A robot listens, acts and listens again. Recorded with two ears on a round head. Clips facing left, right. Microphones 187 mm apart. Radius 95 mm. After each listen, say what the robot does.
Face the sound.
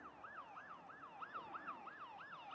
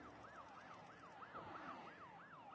Keep listening.
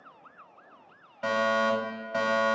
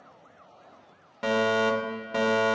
Turn 50° right.
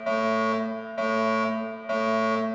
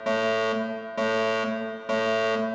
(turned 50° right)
Turn 65° right.
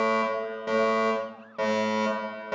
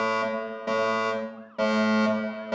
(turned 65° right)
Found it: a fire alarm, straight ahead, 2 to 4 m away.